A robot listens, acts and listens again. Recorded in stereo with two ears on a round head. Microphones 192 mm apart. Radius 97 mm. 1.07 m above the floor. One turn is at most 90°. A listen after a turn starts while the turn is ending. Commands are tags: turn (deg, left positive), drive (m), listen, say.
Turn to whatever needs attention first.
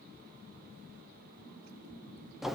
<listen/>
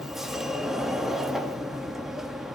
<listen/>
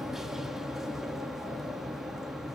<say>I can't make out anything urgent, only a sliding door.</say>